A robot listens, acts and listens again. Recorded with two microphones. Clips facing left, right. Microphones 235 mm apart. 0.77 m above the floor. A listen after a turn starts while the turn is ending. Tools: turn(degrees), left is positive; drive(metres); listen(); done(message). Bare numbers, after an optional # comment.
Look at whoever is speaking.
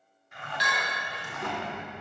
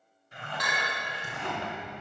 # The child speaking: about 55° left or 125° left.
turn(55)
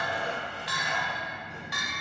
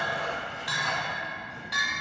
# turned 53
# So it is at 75° left.
turn(75)
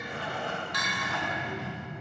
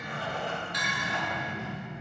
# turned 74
# The child speaking is now 40° left.
turn(40)
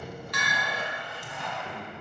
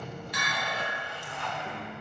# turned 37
# The child speaking is now 15° left.
turn(15)
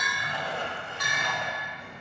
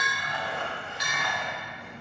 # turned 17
done("Facing the child speaking, 2 to 4 m away.")